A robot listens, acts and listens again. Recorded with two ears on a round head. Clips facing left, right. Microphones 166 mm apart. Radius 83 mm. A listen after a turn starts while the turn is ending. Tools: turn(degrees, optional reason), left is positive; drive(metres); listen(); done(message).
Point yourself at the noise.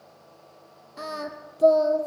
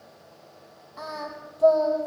turn(degrees=35, reason="The singing: about 35° left or 145° left.")
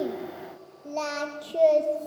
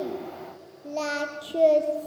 done("Facing the singing.")